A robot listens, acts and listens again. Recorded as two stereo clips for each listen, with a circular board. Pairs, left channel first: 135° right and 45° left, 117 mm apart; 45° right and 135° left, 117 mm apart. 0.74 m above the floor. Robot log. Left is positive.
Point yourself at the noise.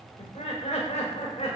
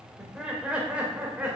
note: The laughter: 150° right.
cmd yaw -150
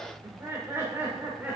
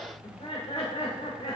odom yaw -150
note: The laughter is now 30° right.
cmd yaw -30
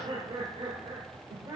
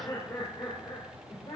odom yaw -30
note: The laughter is now 10° right.
cmd yaw -10
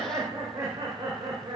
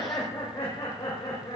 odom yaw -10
note: The laughter is now 10° right.
cmd yaw -10
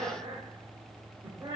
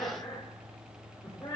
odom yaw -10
end: Found it: laughter, straight ahead.